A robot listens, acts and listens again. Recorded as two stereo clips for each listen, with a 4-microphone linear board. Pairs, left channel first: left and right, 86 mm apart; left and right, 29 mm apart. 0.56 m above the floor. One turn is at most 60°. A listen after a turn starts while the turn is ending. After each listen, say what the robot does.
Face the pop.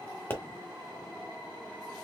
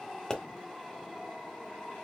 Turn 25° left.
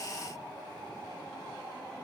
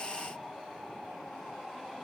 Keep listening.
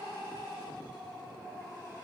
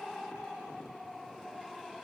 I heard a pop, but can't make it out now. It was about straight ahead or 130° left.